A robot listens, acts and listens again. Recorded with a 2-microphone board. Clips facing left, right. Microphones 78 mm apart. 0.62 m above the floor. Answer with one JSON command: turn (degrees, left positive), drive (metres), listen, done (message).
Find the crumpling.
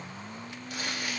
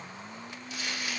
{"turn": 55}
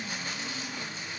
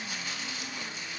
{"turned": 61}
{"listen": true}
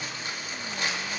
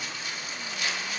{"turn": 55}
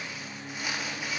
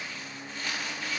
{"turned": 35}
{"turn": 15}
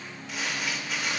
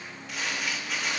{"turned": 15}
{"done": "Facing the crumpling."}